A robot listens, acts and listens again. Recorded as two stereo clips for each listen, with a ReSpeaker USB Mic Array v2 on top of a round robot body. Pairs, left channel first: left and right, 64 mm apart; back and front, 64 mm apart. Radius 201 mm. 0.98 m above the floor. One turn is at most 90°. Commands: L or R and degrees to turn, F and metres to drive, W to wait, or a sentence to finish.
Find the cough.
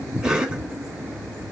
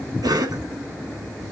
Found it: a cough, straight ahead.